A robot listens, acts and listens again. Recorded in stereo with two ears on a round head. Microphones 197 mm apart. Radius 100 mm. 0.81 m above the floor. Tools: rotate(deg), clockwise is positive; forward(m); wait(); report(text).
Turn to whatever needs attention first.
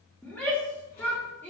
rotate(-30)
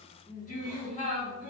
rotate(-145)
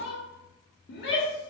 rotate(-50)
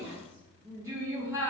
rotate(15)
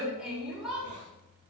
report("Facing the shout.")